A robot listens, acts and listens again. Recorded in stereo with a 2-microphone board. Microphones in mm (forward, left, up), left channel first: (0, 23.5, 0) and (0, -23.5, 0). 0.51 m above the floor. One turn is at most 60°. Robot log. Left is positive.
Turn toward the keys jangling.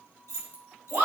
note: The keys jangling: about 70° left or 110° left.
cmd yaw +60
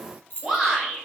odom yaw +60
note: So it is at 45° left.
cmd yaw +45
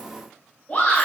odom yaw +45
cmd idle
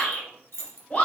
note: The keys jangling is now 55° left.
cmd yaw +55
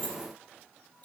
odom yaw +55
note: The keys jangling is now 40° left.
cmd yaw +40
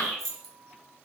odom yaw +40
end: Facing the keys jangling, 1 to 2 m away.